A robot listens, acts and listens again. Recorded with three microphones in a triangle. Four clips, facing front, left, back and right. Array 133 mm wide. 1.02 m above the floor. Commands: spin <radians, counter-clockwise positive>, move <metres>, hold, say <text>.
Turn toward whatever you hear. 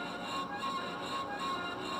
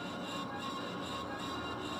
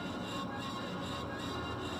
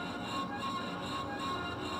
hold
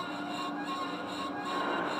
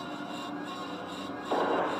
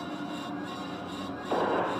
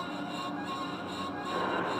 spin 2.36
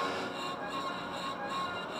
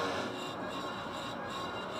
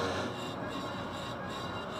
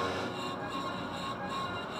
say Facing where the gunshot came from. I can't hear it now.